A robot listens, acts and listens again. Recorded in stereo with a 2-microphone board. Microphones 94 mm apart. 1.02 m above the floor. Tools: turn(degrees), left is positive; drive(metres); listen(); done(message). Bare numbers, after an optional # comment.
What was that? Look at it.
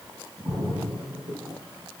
# The splash: about 45° right or 135° right.
turn(-45)
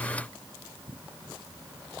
listen()
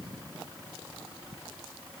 done("I heard a splash, but can't make it out now. It was about straight ahead or 90° right.")